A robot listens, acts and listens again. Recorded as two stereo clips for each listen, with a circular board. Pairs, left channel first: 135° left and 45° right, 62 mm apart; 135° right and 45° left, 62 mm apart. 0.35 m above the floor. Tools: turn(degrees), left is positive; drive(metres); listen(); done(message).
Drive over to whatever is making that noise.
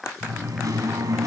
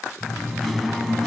turn(degrees=-45)
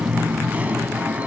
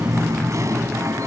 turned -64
turn(degrees=20)
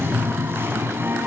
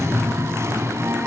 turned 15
drive(metres=1.0)
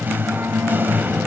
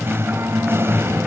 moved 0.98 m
drive(metres=1.0)
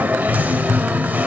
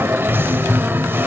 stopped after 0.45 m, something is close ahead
turn(degrees=10)
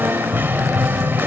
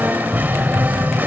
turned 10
done("Arrived at the singing, straight ahead.")